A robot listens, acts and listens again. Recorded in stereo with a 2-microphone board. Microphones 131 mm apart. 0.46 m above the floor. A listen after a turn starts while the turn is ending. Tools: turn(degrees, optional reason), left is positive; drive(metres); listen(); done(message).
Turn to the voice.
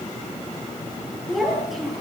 turn(degrees=30)
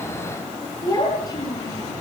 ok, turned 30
turn(degrees=150, reason="So it is at 150° left.")
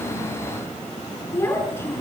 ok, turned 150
turn(degrees=20, reason="The child speaking is now 20° left.")
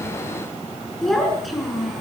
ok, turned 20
done("Facing the child speaking, over 4 m away.")